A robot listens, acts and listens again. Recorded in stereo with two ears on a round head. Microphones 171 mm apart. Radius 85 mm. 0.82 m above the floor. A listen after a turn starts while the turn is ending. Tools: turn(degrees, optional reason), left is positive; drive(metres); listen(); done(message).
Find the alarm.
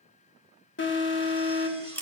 turn(degrees=65, reason="The alarm: about 65° left or 115° left.")
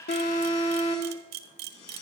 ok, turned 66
turn(degrees=40, reason="So it is at 40° left.")
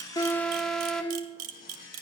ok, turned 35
done("Found it: an alarm, straight ahead.")